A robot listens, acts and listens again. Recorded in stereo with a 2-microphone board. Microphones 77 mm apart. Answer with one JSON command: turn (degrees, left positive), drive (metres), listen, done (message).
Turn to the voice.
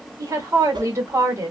{"turn": -40}
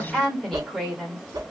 {"done": "Facing the woman speaking, 1 to 2 m away."}